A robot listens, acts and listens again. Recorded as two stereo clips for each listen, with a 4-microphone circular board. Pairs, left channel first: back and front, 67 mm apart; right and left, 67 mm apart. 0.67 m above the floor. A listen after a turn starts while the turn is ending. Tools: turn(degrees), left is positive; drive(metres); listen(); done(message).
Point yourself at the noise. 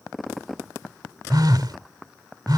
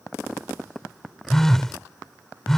done("Found it: a phone buzzing, straight ahead.")